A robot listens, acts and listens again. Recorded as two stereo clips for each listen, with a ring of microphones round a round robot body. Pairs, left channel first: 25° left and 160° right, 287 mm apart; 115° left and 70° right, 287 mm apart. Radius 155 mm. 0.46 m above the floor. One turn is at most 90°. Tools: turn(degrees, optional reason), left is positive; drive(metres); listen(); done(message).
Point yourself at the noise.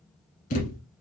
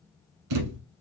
turn(degrees=-40, reason="The thud: 40° right.")
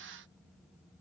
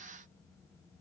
done("Facing where the thud came from. I can't hear it now.")